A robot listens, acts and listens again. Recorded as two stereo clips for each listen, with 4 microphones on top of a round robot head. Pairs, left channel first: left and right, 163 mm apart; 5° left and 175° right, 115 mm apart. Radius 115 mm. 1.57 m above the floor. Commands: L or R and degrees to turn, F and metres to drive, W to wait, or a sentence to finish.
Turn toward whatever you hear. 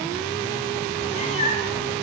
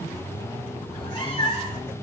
L45
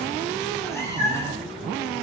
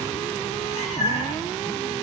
L15
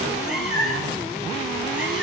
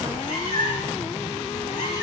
Facing the cat meowing.